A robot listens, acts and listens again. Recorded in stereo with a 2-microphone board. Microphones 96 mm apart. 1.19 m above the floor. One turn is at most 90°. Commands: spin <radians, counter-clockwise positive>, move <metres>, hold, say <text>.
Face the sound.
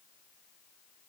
hold
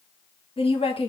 spin 1.57
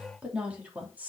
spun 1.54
spin -0.26
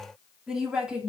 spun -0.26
spin -0.17
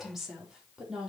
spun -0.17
say Facing the woman speaking.